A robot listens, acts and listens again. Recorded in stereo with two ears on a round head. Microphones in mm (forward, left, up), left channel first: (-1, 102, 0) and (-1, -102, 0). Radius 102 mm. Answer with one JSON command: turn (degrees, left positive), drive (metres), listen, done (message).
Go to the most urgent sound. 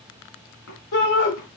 {"turn": 70}
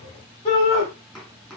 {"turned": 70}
{"turn": 35}
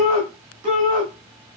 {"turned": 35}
{"drive": 1.0}
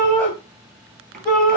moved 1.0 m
{"drive": 1.0}
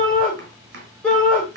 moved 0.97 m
{"drive": 1.0}
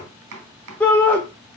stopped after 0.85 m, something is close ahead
{"turn": 10}
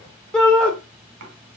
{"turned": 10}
{"done": "I am next to the shout."}